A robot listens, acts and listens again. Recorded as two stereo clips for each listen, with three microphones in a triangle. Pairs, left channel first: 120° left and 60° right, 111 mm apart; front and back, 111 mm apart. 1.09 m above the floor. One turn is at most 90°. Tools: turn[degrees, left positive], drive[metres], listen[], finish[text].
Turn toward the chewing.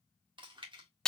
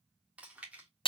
Thought: The chewing: 100° right.
Action: turn[-90]
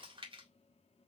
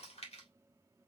Thought: The chewing is now 20° right.
Action: turn[-20]
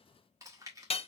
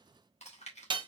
Action: finish[Found it: chewing, straight ahead, 1 to 2 m away.]